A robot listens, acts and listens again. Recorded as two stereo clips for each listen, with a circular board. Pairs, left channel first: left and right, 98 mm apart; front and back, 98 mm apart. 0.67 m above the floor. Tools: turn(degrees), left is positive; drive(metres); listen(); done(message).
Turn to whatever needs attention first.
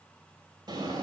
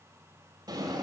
listen()
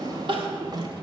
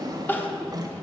turn(degrees=-70)
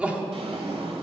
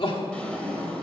turn(degrees=-15)
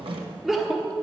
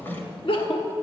done("Found it: crying, straight ahead.")